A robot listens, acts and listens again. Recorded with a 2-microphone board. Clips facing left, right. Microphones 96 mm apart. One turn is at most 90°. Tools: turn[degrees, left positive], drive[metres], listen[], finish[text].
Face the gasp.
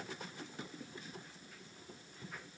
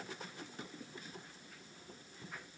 Action: listen[]
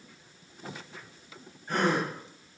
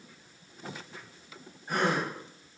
Action: turn[-30]
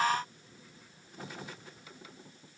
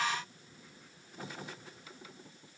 Action: listen[]
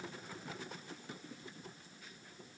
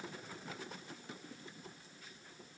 Action: finish[I heard a gasp, but can't make it out now. It was about 20° left or 140° right.]